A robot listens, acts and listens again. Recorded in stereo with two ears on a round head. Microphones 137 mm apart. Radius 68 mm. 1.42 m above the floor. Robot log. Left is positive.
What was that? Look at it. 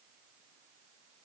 cmd idle
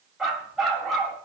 cmd yaw +30
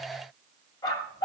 note: So it is at 150° left.
cmd yaw +150
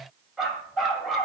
end: Facing the dog barking, 2 to 4 m away.